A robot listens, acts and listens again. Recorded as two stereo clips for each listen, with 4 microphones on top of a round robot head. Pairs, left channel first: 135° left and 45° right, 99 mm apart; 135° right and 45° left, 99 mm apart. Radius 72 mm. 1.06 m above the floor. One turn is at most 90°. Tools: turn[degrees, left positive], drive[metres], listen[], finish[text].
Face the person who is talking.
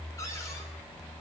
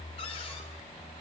Action: listen[]
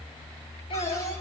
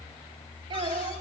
Thought: The child speaking: 95° left.
Action: turn[90]
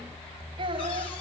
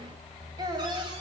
Action: finish[Facing the child speaking.]